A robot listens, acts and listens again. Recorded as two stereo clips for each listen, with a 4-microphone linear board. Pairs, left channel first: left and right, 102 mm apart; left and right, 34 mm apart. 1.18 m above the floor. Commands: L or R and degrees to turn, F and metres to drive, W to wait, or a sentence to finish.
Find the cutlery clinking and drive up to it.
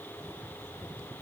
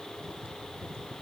W
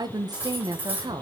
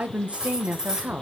R20
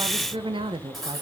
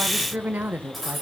F1.0
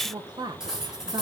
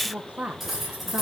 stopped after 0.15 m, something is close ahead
Something is in my way. I am facing the cutlery clinking but have not reached it.